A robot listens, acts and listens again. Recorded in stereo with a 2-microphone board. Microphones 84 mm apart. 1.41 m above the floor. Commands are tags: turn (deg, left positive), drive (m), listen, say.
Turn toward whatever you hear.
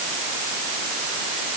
<listen/>
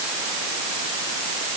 <listen/>
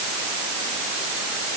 <say>I can't make out anything.</say>